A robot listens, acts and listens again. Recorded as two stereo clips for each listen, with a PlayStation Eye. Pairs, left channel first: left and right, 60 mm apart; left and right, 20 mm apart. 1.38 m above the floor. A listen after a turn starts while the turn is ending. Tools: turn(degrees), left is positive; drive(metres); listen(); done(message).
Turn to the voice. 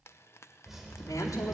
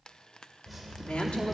turn(degrees=65)
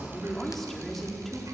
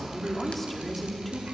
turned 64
done("Facing the woman speaking.")